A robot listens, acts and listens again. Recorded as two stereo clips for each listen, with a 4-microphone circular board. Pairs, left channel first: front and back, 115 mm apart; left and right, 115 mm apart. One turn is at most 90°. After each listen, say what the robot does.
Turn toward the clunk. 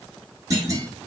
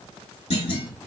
Turn 90° left.
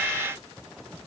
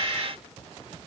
Turn 30° left.
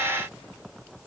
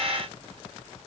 I heard a clunk from this way, but can't make it out now.